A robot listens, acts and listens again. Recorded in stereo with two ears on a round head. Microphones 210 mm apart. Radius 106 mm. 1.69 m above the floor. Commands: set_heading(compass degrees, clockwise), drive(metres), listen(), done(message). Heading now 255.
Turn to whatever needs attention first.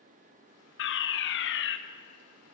set_heading(205)
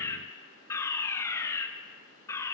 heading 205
set_heading(190)
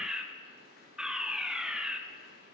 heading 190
done("Found it: a fire alarm, straight ahead.")